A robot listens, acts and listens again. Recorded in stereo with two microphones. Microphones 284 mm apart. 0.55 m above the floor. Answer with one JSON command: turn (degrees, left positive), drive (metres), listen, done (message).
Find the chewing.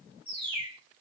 {"listen": true}
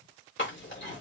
{"turn": 45}
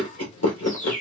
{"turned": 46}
{"turn": 85}
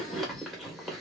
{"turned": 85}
{"done": "Facing the chewing."}